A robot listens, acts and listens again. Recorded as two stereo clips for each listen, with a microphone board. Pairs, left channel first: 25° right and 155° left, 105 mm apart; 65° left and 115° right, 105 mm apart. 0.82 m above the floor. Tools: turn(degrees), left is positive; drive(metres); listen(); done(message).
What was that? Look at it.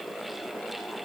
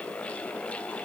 listen()
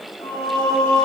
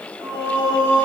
turn(degrees=-70)
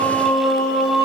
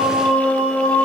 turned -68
done("Facing the singing.")